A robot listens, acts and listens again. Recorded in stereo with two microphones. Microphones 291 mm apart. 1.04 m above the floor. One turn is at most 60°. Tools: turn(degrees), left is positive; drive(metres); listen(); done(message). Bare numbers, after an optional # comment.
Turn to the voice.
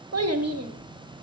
# The child speaking: about 60° right or 120° right.
turn(-60)
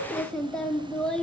done("Found it: a child speaking, straight ahead, 1 to 2 m away.")